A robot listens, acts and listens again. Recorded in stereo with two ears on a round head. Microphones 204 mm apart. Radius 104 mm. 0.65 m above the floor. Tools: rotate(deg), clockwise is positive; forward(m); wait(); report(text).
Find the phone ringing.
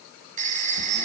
rotate(35)
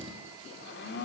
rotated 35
wait()
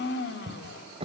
wait()
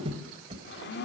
report("I heard a phone ringing, but can't make it out now. It was about straight ahead or 110° right.")